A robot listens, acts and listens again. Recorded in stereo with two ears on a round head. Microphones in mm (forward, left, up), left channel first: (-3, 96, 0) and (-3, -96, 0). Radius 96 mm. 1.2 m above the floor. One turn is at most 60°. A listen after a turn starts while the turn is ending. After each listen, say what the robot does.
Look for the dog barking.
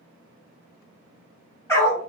Turn 30° left.
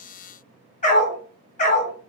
Turn 60° left.
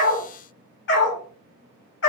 Turn 60° left.
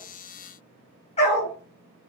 Turn 35° left.
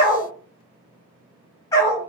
Turn 20° left.
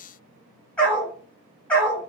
Found it: a dog barking, straight ahead.